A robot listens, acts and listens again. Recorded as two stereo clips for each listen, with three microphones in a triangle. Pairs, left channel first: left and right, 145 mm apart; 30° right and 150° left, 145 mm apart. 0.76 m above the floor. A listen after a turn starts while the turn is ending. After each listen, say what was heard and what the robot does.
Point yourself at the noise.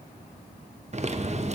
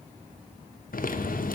The typing on a keyboard: 45° right. Turn 45° right.
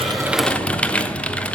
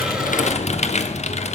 The typing on a keyboard is now 10° left. Turn 10° left.
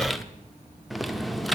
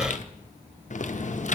Found it: typing on a keyboard, straight ahead, under 1 m away.